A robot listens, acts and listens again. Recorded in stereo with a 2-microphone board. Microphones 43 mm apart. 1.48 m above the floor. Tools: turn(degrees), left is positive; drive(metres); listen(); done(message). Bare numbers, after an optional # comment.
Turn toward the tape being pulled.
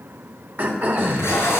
# The tape being pulled: about 70° left or 110° left.
turn(70)
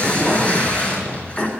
# So it is at 30° left.
turn(30)
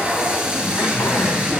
# The tape being pulled is now 20° right.
turn(-20)
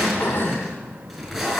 done("Found it: tape being pulled, straight ahead, over 4 m away.")